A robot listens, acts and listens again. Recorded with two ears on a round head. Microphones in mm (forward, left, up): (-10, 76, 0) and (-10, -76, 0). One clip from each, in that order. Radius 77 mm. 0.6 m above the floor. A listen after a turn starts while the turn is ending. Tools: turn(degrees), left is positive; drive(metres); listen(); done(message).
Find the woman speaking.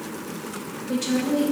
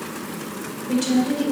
turn(degrees=-20)
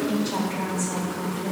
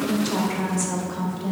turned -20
turn(degrees=-125)
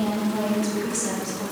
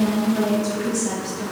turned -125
turn(degrees=20)
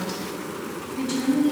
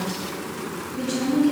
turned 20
done("Found it: a woman speaking, straight ahead, 2 to 4 m away.")